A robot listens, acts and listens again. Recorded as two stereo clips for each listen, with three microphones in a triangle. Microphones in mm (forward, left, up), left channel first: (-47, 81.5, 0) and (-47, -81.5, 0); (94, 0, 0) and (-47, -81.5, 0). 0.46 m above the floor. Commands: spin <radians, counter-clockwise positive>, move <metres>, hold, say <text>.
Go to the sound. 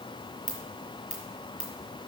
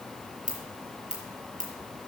spin 3.05
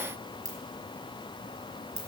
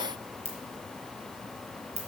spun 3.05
spin -0.35
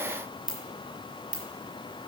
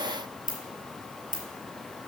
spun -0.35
spin -0.17
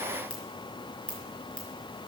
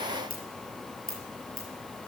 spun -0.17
move 1.0
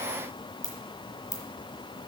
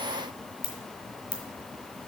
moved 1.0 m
spin 0.26
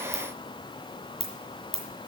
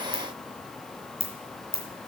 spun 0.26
move 1.0
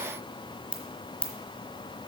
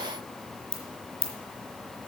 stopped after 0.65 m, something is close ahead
say I am next to the ringtone.